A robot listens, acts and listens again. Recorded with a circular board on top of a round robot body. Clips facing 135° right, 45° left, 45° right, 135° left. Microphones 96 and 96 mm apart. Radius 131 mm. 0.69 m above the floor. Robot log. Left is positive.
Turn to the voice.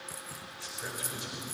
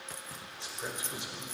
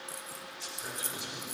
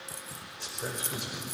note: The man speaking: 110° left.
cmd yaw +110
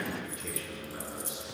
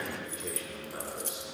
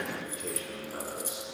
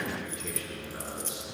end: Found it: a man speaking, straight ahead.